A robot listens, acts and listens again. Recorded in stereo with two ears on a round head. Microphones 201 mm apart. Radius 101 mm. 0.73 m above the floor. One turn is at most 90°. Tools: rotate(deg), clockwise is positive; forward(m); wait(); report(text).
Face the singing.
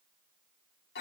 wait()
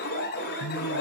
rotate(-65)
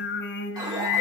rotate(-50)
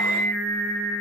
report("Found it: singing, straight ahead.")